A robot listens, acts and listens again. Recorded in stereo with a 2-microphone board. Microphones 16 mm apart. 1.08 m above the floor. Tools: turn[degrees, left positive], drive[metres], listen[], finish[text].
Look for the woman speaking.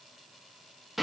Action: listen[]
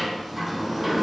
Action: listen[]
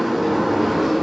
Action: finish[I can't make out a woman speaking to turn to.]